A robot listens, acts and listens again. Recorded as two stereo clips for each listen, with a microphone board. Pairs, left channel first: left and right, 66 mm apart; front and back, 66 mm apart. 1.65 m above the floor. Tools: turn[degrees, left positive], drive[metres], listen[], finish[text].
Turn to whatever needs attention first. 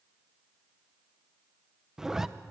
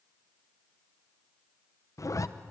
Action: listen[]
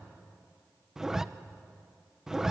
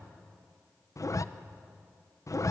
Action: listen[]
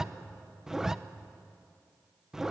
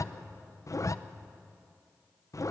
Action: finish[I can't make out anything urgent to turn to.]